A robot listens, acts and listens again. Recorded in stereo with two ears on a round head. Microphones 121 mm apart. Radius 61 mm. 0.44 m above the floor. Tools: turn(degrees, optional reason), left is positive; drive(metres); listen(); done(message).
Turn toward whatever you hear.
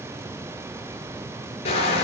turn(degrees=45, reason="The crushing: about 45° left or 135° left.")
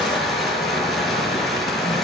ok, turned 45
done("Facing the crushing, over 4 m away.")